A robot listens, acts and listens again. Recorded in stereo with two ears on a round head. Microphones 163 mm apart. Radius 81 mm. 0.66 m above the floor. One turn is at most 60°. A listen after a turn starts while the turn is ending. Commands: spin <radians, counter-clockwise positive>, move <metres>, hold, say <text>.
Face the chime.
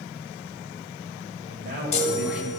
spin 0.61
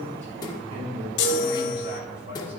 spin 1.05
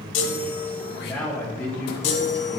spin 1.05
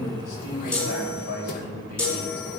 say Found it: a chime, straight ahead.